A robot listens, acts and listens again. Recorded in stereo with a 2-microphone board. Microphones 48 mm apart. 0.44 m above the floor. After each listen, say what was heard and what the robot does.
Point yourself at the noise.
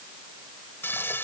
The frying: about 55° left or 125° left. Turn 55° left.
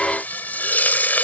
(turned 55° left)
So it is at 50° left. Turn 50° left.
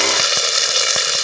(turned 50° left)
Facing the frying.